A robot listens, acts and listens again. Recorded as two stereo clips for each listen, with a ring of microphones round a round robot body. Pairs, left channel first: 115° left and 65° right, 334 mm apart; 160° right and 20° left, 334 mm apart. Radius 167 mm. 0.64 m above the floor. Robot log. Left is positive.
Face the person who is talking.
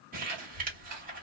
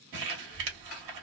note: The child speaking: 45° right.
cmd yaw -45
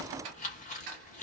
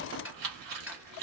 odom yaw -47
end: Found it: a child speaking, straight ahead.